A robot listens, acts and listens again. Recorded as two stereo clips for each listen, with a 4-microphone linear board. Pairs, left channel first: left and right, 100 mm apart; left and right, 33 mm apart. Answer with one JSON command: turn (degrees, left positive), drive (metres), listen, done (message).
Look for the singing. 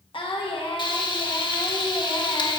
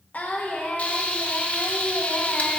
{"turn": 60}
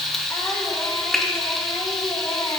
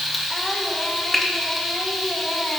{"listen": true}
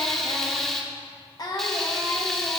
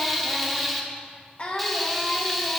{"turn": 45}
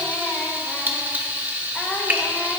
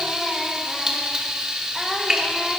{"listen": true}
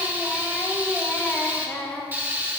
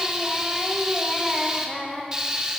{"turn": 20}
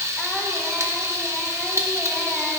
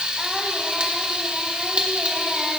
{"listen": true}
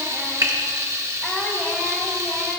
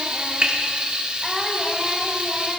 {"listen": true}
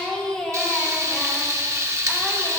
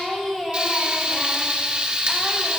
{"turn": 10}
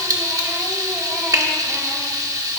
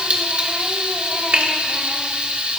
{"listen": true}
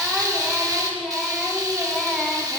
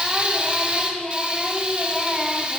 {"done": "Found it: singing, straight ahead, 1 to 2 m away."}